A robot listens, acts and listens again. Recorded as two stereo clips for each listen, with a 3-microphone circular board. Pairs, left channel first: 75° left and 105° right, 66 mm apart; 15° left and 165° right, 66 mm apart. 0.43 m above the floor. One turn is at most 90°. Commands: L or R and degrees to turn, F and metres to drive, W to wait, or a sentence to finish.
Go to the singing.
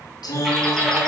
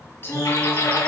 L70
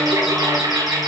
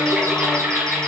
W
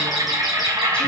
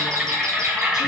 W
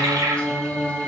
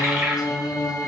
F1.0
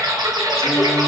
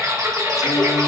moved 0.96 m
W
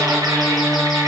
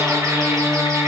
R10
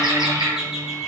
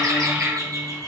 W
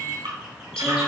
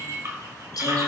W
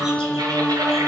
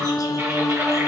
F1.0
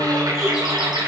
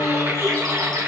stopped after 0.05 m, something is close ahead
Arrived at the singing, straight ahead.